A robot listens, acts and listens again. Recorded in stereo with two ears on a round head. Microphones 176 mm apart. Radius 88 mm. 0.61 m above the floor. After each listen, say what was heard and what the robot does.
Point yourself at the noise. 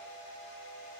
Keep listening.
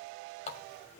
The running tap: about 35° left or 145° left. Turn 35° left.
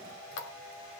So it is at 110° left. Turn 110° left.
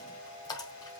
The running tap is now 20° left. Turn 20° left.
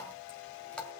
Found it: a running tap, straight ahead.